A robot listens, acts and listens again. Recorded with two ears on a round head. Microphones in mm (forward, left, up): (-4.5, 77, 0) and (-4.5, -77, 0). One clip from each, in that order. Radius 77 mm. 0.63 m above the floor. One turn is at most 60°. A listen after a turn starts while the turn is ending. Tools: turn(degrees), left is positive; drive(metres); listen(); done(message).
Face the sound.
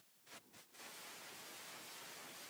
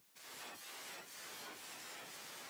listen()
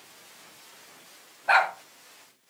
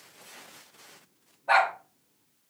turn(degrees=50)
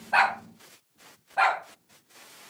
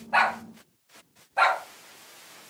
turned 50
done("Facing the dog barking, 2 to 4 m away.")